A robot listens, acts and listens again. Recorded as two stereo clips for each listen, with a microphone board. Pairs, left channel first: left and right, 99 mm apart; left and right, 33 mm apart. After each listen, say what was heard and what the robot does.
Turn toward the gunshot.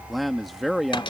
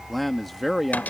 Keep listening.
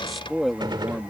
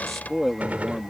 The gunshot: about 50° right or 130° right. Turn 50° right.
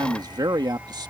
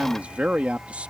Keep listening.
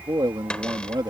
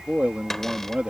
I heard a gunshot, but can't make it out now. It was about straight ahead or 80° right.